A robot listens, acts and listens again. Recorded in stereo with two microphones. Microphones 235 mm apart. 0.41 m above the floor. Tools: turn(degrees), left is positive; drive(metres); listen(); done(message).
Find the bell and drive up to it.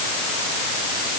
listen()
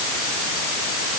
listen()
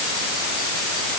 done("I can't make out a bell to turn to.")